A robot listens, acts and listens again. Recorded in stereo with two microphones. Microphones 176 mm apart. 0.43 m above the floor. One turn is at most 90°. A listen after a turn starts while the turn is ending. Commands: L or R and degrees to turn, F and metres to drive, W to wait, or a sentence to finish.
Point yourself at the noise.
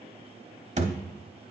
R45
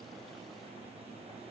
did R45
W
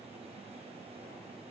I heard a thud, but can't make it out now. It was about straight ahead or 90° right.